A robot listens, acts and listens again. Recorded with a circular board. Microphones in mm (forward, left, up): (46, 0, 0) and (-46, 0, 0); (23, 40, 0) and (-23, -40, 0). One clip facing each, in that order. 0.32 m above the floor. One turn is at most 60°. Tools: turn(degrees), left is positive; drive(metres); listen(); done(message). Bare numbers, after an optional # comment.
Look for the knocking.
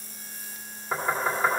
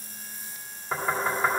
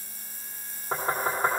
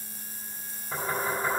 # The knocking: 90° left.
turn(60)
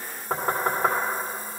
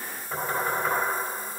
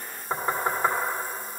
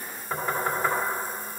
done("Facing the knocking.")